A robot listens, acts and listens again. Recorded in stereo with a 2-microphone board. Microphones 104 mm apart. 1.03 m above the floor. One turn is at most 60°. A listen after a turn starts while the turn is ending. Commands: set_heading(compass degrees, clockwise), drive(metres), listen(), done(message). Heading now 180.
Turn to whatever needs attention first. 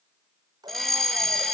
set_heading(150)
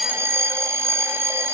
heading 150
set_heading(175)
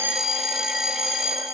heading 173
done("Found it: a fire alarm, straight ahead.")